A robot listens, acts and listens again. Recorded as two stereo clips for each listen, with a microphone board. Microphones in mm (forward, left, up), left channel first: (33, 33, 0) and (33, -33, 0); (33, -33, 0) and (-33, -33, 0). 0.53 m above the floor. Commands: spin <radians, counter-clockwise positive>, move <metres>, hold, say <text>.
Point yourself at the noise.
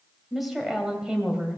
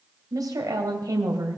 spin -2.88
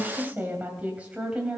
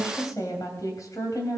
spin -0.26
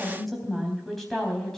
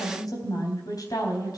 say Found it: a woman speaking, straight ahead.